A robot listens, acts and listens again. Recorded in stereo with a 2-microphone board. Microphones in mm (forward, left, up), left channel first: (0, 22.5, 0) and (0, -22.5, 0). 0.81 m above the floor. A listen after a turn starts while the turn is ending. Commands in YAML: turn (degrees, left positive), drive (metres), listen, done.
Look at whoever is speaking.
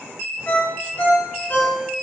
listen: true
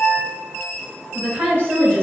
turn: -70
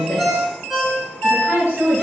turn: -50
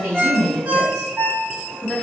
turn: -20
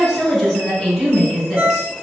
done: "Found it: a woman speaking, straight ahead, 2 to 4 m away."